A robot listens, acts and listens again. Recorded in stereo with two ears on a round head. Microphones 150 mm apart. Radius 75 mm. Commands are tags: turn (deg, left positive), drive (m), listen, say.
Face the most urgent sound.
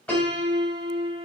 <listen/>
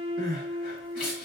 <turn deg="55"/>
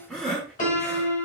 <say>Facing the crying.</say>